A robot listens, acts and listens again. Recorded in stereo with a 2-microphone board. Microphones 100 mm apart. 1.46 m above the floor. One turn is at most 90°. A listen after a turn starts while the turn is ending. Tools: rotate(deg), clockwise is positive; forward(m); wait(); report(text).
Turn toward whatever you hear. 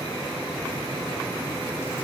wait()
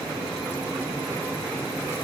wait()
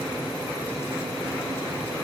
report("I can't make out anything to turn to.")